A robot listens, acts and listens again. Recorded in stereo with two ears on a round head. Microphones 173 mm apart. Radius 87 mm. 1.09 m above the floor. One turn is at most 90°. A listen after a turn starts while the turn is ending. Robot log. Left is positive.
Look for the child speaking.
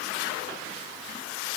cmd idle
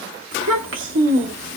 note: The child speaking: about 75° right or 105° right.
cmd yaw -75
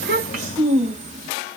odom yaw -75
note: So it is at 40° right.
cmd yaw -40
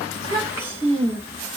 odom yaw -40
note: The child speaking is now 15° right.
cmd yaw -15
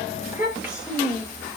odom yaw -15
end: Facing the child speaking.